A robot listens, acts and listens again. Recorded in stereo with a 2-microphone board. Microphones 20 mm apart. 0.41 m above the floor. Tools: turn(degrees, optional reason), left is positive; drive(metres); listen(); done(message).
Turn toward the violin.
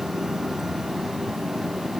listen()
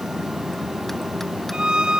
turn(degrees=-50, reason="The violin: about 50° right or 130° right.")
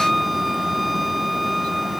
done("Found it: a violin, straight ahead.")